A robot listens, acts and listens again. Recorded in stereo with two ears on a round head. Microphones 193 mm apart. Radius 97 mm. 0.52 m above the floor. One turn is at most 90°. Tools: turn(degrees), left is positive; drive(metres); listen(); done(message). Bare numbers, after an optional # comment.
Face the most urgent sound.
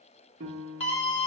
# The scream: about 30° left or 150° left.
turn(30)
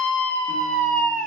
done("Found it: a scream, straight ahead, 1 to 2 m away.")